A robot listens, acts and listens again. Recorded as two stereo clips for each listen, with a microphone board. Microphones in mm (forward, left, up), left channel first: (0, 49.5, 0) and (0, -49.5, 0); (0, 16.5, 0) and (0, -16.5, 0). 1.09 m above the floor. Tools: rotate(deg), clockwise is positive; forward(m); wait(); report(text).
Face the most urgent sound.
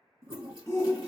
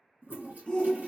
rotate(-30)
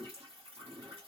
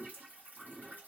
wait()
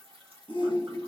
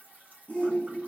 rotate(-115)
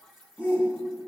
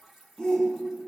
rotate(-25)
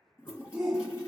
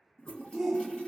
report("Facing the shout.")